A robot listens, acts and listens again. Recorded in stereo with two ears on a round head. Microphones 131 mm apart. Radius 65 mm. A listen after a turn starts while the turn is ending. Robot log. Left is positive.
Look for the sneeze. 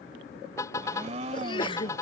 note: The sneeze: about 30° left or 150° left.
cmd yaw +30
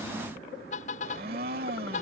cmd idle
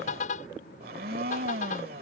end: I heard a sneeze, but can't make it out now. It was about straight ahead or 120° left.